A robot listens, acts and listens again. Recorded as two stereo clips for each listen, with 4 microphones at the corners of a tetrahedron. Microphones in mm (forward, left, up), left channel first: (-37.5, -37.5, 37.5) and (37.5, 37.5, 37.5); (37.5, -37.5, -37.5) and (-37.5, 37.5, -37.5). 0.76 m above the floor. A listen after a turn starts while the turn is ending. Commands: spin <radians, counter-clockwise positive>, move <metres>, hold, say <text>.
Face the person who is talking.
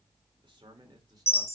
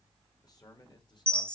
say Facing the man speaking.